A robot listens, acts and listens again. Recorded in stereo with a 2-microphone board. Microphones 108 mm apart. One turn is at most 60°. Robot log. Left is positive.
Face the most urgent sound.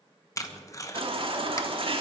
note: The baby crying: about 55° right or 125° right.
cmd yaw -55
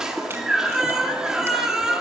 end: Facing the baby crying, 1 to 2 m away.